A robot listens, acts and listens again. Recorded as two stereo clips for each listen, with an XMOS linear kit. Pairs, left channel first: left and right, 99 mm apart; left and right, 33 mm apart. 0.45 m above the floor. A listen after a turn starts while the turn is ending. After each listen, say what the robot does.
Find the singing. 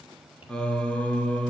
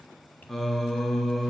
Turn 15° left.
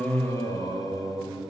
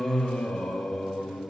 Turn 35° left.
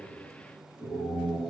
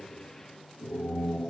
Turn 105° left.
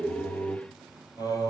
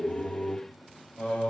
Turn 35° left.
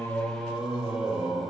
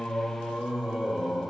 Facing the singing, over 4 m away.